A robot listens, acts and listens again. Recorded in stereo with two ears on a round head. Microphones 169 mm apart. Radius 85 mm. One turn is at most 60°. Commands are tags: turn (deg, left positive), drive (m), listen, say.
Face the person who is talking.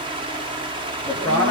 <turn deg="30"/>
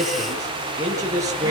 <turn deg="-20"/>
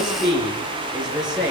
<say>Facing the man speaking.</say>